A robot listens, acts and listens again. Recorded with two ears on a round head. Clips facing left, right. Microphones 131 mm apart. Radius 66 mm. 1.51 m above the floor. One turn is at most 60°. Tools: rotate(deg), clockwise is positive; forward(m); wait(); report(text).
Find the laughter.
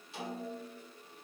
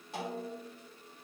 wait()
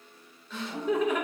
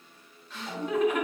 rotate(-60)
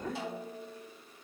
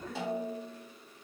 rotate(-30)
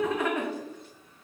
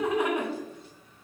rotate(15)
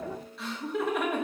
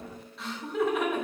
report("Found it: laughter, straight ahead.")